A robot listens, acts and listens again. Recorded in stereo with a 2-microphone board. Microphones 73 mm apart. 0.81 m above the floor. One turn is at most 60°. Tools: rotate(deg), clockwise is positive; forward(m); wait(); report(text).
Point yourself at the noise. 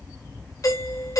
rotate(-45)
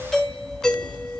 report("Found it: a doorbell, straight ahead.")